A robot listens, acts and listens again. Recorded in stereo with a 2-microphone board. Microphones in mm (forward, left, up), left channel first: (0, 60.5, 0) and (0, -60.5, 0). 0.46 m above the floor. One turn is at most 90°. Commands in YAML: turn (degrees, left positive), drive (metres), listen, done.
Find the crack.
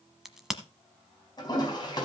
turn: -30
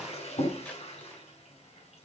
listen: true
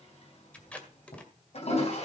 done: "I heard a crack, but can't make it out now. It was about 25° left or 145° right."